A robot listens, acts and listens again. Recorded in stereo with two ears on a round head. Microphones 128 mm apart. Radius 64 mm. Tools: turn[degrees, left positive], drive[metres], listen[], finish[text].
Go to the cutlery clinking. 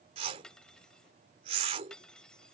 Action: turn[30]
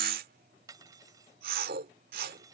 Thought: So it is at 25° right.
Action: turn[-25]
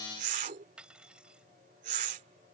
Action: drive[1.0]
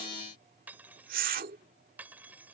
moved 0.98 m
Thought: The cutlery clinking is now 15° right.
Action: turn[-15]
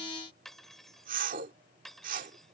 Action: drive[1.0]
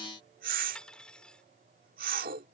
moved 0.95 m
Action: drive[1.0]
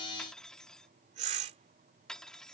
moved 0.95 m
Action: drive[1.0]
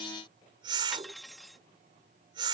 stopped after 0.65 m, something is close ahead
Action: finish[Arrived at the cutlery clinking, straight ahead.]